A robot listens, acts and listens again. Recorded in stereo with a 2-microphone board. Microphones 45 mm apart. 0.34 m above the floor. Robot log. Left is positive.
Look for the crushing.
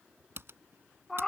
cmd idle
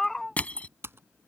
note: The crushing: about 35° left or 145° left.
cmd yaw +35
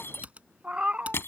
note: So it is at 105° left.
cmd yaw +105
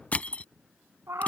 note: The crushing is now 35° left.
cmd yaw +35
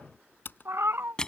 note: The crushing is now 20° left.
cmd yaw +20
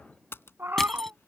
cmd idle
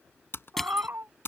note: The crushing is now 10° left.
cmd yaw +10
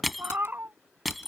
end: Facing the crushing.